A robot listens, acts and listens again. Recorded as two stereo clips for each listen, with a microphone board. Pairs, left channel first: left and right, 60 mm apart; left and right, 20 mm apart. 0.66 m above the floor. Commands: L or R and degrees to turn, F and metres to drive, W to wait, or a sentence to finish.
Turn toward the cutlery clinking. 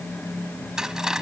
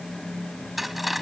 R30
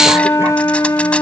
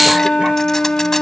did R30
W
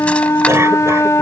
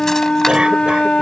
W
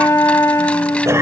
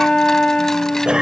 I heard cutlery clinking, but can't make it out now. It was about 20° left or 140° right.